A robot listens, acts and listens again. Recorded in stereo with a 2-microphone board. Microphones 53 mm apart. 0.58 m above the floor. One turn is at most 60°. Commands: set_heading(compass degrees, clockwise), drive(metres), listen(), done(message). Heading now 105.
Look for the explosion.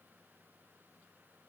listen()
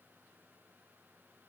listen()
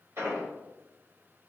set_heading(165)
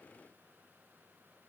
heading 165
listen()
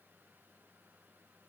done("I heard an explosion, but can't make it out now. It was about straight ahead or 60° right.")